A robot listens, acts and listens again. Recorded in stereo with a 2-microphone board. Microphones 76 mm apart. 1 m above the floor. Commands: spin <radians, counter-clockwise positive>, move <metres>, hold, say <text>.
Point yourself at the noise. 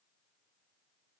hold
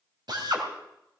spin -1.13
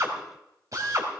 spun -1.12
spin -0.79
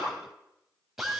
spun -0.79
say Facing the drill, 2 to 4 m away.